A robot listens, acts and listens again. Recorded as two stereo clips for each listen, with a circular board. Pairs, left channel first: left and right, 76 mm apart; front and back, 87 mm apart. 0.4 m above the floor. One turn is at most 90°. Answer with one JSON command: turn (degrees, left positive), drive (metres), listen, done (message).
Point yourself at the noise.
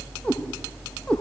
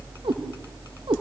{"turn": 90}
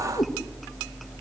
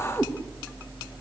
{"turn": 80}
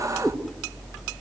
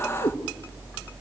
{"done": "Found it: a cat meowing, straight ahead."}